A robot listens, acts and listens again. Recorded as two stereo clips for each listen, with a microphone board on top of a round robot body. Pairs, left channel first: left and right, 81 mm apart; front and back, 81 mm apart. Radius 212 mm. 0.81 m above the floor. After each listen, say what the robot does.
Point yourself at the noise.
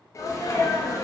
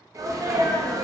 Turn 135° left.
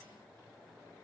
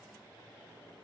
Facing where the sneeze came from. I can't hear it now.